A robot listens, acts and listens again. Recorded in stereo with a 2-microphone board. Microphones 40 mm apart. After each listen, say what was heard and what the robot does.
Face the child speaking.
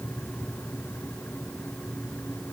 Keep listening.
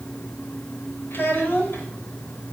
The child speaking: about 60° left or 120° left. Turn 60° left.
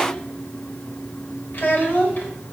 So it is at 55° left. Turn 55° left.
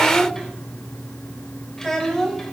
The child speaking is now 15° left. Turn 15° left.
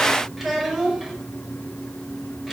Facing the child speaking.